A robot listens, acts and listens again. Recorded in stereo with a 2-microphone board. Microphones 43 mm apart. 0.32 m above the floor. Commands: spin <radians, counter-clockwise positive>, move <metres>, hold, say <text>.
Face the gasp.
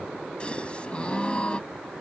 spin 0.44
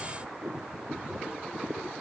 hold
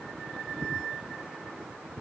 say I heard a gasp, but can't make it out now. It was about straight ahead or 130° left.